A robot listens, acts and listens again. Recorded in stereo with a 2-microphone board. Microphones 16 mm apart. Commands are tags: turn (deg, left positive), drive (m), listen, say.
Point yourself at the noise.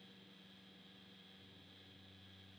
<listen/>
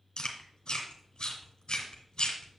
<turn deg="75"/>
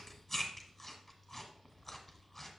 <turn deg="10"/>
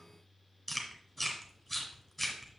<say>Found it: chewing, straight ahead.</say>